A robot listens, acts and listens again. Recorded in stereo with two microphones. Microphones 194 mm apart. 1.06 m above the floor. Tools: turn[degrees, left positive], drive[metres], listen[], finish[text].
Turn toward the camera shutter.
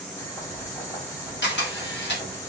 Thought: The camera shutter: about 65° left or 115° left.
Action: turn[65]
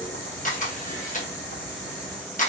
Thought: So it is at 45° left.
Action: turn[45]
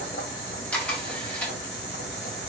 Action: finish[Facing the camera shutter.]